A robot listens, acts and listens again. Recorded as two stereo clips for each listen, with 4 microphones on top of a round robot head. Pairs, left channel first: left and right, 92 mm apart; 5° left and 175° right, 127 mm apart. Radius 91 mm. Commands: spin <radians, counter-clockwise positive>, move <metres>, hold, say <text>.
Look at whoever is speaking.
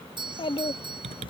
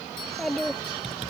spin 1.57
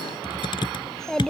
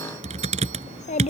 say Found it: a child speaking, straight ahead.